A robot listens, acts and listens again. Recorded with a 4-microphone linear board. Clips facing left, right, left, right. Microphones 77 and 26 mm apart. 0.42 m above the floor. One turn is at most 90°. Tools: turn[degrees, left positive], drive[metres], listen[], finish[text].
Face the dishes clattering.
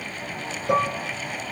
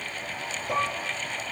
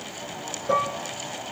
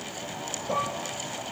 Thought: The dishes clattering: about 65° left or 115° left.
Action: turn[65]
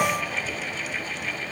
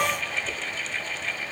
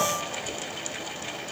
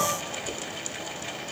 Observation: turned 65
Action: finish[Facing the dishes clattering, over 4 m away.]